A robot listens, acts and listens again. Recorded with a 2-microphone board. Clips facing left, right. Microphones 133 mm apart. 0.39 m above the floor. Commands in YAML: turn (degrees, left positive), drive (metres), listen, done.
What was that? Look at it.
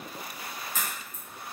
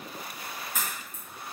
turn: -30
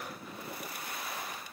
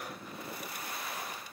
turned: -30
listen: true
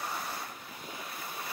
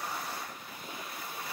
done: "I heard a crack, but can't make it out now. It was about 15° left or 135° right."